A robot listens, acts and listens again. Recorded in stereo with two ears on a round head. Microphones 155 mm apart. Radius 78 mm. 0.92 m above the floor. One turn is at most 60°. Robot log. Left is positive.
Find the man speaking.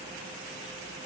cmd idle
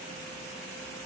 cmd idle
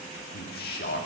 note: The man speaking: about 55° left or 125° left.
cmd yaw +55
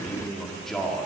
end: Facing the man speaking.